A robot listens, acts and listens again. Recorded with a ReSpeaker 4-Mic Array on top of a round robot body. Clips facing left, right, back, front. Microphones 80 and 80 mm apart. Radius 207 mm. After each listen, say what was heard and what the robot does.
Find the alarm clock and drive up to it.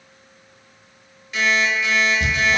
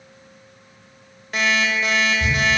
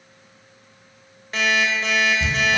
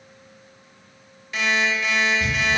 The alarm clock: 130° right. Turn 130° right.
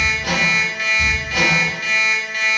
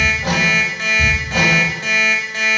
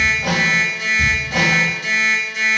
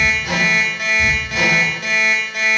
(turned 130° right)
The alarm clock is now 30° right. Turn 30° right.
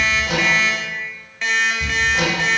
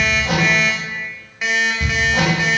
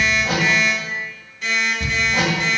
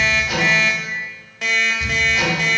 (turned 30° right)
The alarm clock is now 10° right. Turn 10° right.
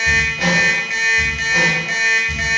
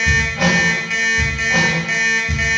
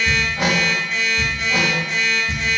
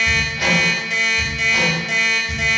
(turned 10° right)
Drive 1.0 m forward.
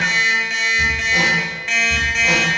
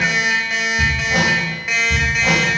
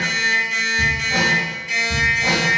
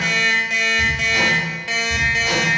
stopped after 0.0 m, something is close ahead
Blocked. The alarm clock is further on, straight ahead.